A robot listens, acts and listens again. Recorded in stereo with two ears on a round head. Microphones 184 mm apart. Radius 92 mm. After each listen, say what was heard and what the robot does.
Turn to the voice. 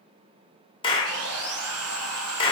Keep listening.
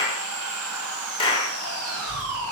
The child speaking: about 65° right or 115° right. Turn 65° right.
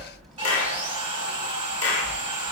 Found it: a child speaking, straight ahead, 2 to 4 m away.